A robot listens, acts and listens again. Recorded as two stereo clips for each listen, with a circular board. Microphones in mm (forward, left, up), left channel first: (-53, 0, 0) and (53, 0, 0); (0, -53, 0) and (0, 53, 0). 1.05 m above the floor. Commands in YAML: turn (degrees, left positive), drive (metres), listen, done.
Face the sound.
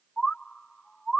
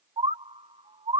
turn: 95
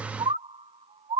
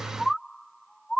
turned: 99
done: "Found it: a bird, straight ahead."